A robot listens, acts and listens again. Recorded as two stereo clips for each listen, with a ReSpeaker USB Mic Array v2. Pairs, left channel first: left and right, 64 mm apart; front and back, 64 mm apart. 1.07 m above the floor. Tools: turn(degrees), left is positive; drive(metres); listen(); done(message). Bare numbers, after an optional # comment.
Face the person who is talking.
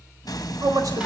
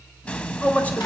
# The man speaking: 70° right.
turn(-70)
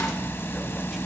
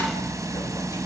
listen()
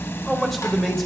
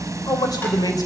done("Found it: a man speaking, straight ahead.")